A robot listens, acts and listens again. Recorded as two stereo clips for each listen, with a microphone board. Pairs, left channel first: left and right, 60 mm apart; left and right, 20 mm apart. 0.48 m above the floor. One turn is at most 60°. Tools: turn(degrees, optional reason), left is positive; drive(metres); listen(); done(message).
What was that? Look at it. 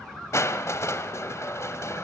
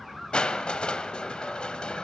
turn(degrees=50, reason="The crushing: about 50° left or 130° left.")
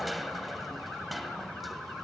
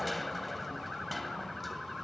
done("Facing the crushing.")